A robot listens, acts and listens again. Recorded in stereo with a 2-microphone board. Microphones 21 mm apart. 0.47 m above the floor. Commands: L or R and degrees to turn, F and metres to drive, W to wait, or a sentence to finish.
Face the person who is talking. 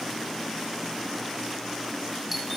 W
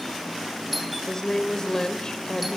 L30
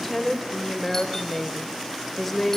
Facing the woman speaking, 2 to 4 m away.